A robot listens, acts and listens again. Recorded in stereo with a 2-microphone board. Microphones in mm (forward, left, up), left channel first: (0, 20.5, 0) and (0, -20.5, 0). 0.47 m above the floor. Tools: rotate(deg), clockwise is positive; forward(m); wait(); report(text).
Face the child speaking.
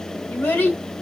rotate(-60)
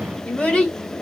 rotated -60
rotate(-30)
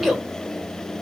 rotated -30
report("Facing the child speaking, 1 to 2 m away.")